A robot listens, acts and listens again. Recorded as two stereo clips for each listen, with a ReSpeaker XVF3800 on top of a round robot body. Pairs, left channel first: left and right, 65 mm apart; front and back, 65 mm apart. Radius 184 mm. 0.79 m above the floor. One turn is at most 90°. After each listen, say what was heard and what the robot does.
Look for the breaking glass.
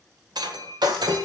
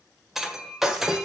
The breaking glass: 95° right. Turn 90° right.
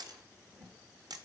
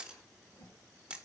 I heard breaking glass from this way, but can't make it out now.